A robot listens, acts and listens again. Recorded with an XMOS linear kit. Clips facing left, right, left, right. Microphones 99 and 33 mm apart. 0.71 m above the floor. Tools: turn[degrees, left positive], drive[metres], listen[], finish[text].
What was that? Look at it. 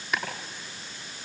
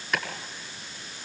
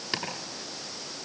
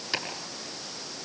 Action: turn[30]
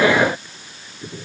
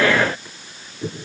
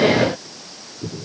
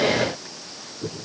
Thought: So it is at 25° right.
Action: turn[-25]
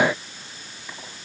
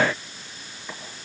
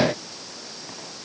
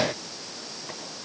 Action: listen[]
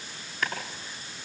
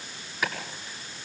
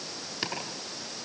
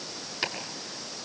Thought: The chopping is now 10° right.
Action: turn[-10]
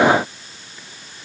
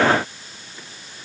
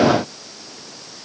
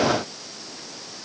Action: listen[]
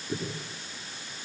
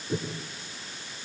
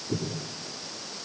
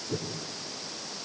Action: finish[Facing the chopping.]